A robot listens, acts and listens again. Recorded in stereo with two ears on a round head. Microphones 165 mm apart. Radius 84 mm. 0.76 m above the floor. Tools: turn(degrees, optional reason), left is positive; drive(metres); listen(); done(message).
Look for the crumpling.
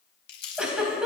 turn(degrees=55, reason="The crumpling: about 55° left or 125° left.")
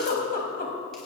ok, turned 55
listen()
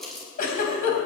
done("Facing the crumpling.")